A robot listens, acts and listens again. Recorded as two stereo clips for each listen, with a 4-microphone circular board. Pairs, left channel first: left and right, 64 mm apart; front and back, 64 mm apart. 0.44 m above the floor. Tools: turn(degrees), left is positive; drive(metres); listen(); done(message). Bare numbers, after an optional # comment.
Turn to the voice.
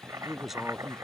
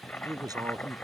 # The man speaking: 175° right.
turn(-175)
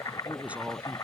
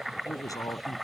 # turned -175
# The man speaking is now 20° right.
turn(-20)
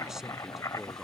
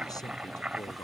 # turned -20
listen()
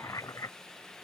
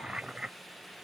listen()
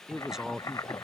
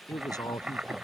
done("Facing the man speaking.")